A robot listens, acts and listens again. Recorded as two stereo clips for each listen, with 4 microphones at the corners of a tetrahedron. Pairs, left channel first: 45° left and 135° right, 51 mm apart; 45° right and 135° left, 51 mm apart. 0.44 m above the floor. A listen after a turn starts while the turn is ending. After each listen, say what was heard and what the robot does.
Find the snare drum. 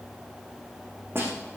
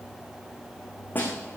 The snare drum: 100° right. Turn 100° right.
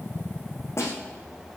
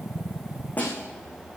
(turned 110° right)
The snare drum is now 15° left. Turn 15° left.
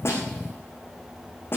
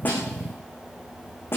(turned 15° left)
Found it: a snare drum, straight ahead.